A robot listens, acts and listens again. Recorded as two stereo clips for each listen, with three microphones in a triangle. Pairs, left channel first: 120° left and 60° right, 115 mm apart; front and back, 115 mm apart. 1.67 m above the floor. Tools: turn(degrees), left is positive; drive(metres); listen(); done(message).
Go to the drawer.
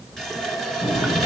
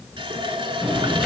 turn(degrees=90)
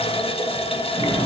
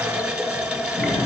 turn(degrees=-20)
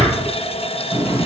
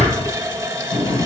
drive(metres=1.0)
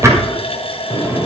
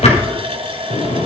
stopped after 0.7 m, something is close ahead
done("Blocked. The drawer is further on, straight ahead.")